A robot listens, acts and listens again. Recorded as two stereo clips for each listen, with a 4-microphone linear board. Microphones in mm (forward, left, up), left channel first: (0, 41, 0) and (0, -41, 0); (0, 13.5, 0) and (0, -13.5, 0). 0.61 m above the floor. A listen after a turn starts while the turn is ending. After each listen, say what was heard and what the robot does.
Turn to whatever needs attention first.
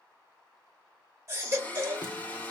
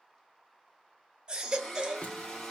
The baby crying: about 35° right or 145° right. Turn 35° right.
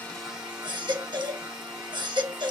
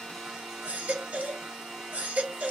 So it is at 110° right. Turn 110° right.
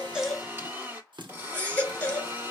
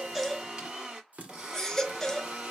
The baby crying is now 20° left. Turn 20° left.
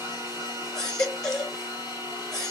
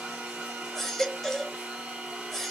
Facing the baby crying, 1 to 2 m away.